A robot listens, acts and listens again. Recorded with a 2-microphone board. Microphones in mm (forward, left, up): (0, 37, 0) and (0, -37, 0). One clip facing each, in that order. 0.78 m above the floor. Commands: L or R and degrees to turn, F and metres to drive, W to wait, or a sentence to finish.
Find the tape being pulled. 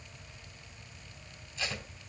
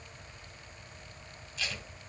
L30
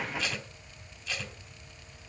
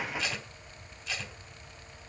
Found it: tape being pulled, straight ahead.